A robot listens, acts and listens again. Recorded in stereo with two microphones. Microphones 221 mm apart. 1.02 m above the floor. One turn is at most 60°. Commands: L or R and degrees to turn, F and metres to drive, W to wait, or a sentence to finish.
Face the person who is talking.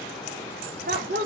R50
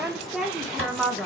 Facing the woman speaking, under 1 m away.